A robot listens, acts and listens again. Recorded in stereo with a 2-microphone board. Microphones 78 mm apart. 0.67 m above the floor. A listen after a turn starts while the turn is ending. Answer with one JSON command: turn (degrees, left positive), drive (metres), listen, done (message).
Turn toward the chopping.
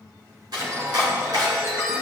{"turn": -65}
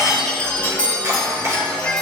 {"turn": -40}
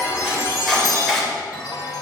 {"done": "Facing the chopping."}